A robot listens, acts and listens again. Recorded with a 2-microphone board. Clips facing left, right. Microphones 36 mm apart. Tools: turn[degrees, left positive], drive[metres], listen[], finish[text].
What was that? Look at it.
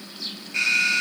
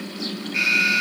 Action: turn[-30]
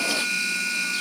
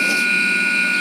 Thought: So it is at 140° right.
Action: turn[-140]
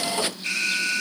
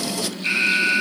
Thought: The alarm is now 30° right.
Action: turn[-30]
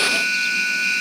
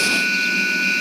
Action: finish[Found it: an alarm, straight ahead.]